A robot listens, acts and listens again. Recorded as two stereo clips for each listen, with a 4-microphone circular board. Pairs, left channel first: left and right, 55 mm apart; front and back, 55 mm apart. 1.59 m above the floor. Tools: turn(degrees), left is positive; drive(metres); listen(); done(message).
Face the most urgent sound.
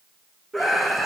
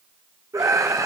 turn(degrees=180)
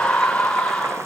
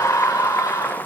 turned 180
turn(degrees=15)
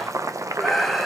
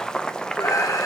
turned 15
done("Facing the scream, under 1 m away.")